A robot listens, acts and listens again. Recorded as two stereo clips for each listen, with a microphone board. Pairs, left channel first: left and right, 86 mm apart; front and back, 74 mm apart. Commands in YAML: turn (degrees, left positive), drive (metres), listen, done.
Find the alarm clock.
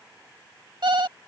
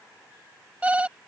turn: -110
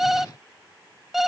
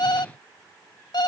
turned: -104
done: "Facing the alarm clock."